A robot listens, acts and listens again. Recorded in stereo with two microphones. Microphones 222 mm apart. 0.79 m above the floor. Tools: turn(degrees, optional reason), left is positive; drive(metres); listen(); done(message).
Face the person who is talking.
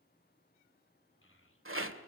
turn(degrees=70, reason="The child speaking: about 70° left or 110° left.")
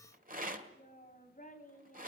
turn(degrees=35, reason="So it is at 35° left.")
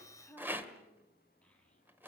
done("Facing the child speaking, over 4 m away.")